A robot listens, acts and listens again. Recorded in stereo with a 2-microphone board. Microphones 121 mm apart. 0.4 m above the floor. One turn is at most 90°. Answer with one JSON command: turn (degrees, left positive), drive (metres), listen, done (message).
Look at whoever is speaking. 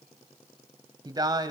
{"turn": -35}
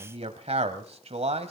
{"turn": -90}
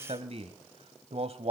{"turn": -65}
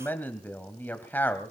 {"turn": 15}
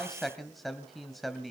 {"done": "Found it: a man speaking, straight ahead, 1 to 2 m away."}